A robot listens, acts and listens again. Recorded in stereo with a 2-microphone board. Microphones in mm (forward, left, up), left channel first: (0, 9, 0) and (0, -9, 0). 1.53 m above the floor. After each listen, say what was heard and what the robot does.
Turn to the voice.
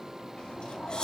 Keep listening.
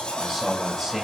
Turn 30° right.
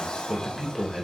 Facing the man speaking, 2 to 4 m away.